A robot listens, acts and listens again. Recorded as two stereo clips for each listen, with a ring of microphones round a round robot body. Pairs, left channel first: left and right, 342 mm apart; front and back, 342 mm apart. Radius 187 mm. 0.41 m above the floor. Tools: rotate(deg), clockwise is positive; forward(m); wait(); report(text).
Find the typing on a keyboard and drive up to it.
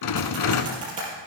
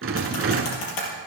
rotate(20)
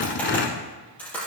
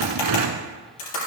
forward(1.0)
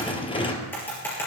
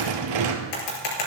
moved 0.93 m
forward(1.0)
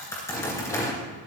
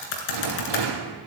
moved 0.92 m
forward(1.0)
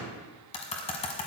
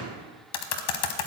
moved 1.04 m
rotate(-15)
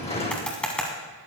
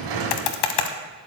forward(1.0)
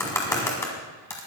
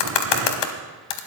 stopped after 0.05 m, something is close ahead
report("I am next to the typing on a keyboard.")